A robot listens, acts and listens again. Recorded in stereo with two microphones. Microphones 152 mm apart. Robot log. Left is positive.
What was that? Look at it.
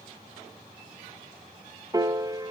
note: The piano: about 25° right or 155° right.
cmd yaw -25
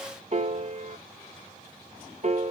note: So it is at 130° right.
cmd yaw -130
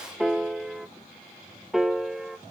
end: Found it: a piano, straight ahead.